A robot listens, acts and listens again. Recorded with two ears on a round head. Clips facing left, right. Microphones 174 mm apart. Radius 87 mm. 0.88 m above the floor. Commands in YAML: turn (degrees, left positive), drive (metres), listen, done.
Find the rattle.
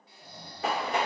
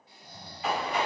turn: 40
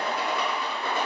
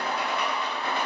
turn: 95
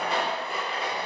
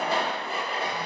done: "Found it: a rattle, straight ahead."